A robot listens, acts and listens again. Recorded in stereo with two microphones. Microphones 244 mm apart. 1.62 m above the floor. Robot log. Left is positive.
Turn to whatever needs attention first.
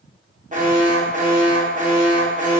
note: The alarm: about 30° right or 150° right.
cmd yaw -30
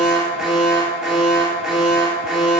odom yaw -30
end: Facing the alarm, 1 to 2 m away.